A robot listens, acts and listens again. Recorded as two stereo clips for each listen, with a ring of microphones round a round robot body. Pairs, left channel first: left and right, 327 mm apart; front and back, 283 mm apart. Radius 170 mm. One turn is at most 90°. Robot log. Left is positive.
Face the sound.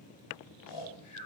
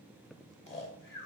note: The snoring: 50° left.
cmd yaw +50
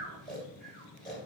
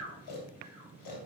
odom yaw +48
end: Facing the snoring, 2 to 4 m away.